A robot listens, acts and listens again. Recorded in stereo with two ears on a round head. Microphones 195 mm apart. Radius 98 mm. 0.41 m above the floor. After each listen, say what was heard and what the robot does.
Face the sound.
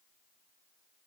Keep listening.
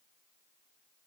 Keep listening.
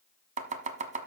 The chopping: about 35° right or 145° right. Turn 35° right.
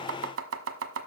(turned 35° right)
So it is at 110° right. Turn 110° right.
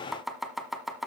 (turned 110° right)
Found it: chopping, straight ahead.